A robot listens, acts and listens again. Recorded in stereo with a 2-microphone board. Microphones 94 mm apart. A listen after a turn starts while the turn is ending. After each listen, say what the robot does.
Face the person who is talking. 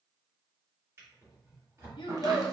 Turn 60° left.
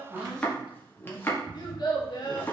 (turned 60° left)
Turn 55° left.
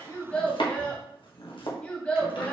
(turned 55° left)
Turn 15° left.
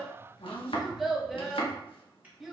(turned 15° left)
Facing the child speaking, under 1 m away.